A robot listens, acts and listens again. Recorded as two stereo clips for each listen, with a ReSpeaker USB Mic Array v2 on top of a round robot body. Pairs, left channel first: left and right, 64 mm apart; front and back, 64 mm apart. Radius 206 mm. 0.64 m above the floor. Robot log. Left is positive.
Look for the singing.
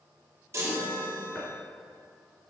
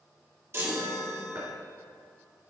cmd idle
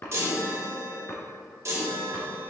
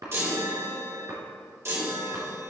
cmd idle
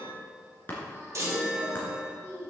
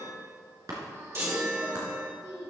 note: The singing: 150° right.
cmd yaw -150
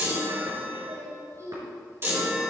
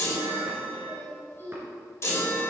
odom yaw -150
note: The singing is now 60° right.
cmd yaw -60
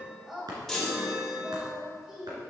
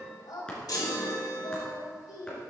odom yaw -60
note: The singing is now 10° right.
cmd yaw -10
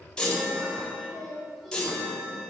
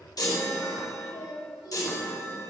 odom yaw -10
end: Found it: singing, straight ahead, over 4 m away.